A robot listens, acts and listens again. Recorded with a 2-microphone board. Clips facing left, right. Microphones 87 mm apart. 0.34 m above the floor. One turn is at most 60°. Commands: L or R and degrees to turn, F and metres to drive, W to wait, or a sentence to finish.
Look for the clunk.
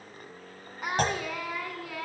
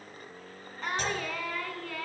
L60
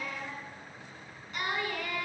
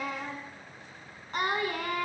W
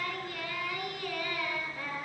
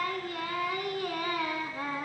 I heard a clunk, but can't make it out now. It was about straight ahead or 60° left.